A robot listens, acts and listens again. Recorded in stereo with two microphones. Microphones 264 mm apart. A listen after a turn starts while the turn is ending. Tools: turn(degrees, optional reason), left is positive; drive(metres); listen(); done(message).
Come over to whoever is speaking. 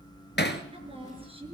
turn(degrees=-25, reason="The woman speaking: about 25° right or 155° right.")
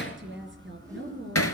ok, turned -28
turn(degrees=-130, reason="So it is at 130° right.")
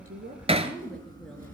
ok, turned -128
drive(metres=1.0)
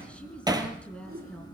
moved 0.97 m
drive(metres=1.0)
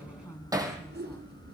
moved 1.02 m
listen()
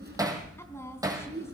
turn(degrees=10, reason="The woman speaking is now 10° left.")
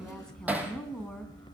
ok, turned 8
drive(metres=1.0)
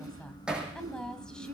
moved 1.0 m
drive(metres=1.0)
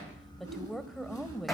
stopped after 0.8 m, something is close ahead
done("I am next to the woman speaking.")